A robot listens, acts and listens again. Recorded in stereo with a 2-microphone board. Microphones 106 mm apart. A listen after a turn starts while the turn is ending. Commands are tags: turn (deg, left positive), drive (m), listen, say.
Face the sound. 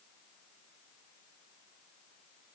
<listen/>
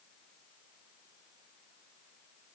<listen/>
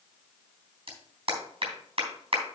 <turn deg="-60"/>
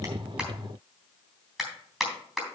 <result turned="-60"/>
<say>Facing the clap, 2 to 4 m away.</say>